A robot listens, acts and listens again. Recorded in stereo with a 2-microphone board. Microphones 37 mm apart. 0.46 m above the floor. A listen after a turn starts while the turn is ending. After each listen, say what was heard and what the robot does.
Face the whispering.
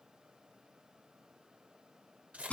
Keep listening.
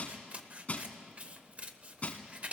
Keep listening.
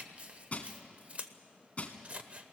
I can't make out whispering, only scissors and crushing.